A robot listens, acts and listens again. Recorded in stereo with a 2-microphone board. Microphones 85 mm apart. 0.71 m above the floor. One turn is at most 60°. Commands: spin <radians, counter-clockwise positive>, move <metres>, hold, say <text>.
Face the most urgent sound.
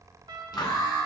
spin 0.87
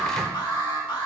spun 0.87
spin 1.05
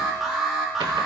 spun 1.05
say Found it: an alarm, straight ahead, 2 to 4 m away.